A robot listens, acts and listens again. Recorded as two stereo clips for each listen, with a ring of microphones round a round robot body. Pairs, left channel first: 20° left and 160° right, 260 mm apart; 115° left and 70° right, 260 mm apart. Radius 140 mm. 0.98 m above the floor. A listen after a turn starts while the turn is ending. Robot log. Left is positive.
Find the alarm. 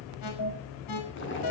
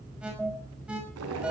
note: The alarm: 20° left.
cmd yaw +20
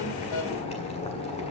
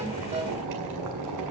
cmd idle
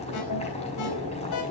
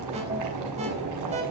cmd idle
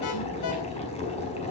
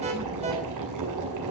end: I heard an alarm from this way, but can't make it out now.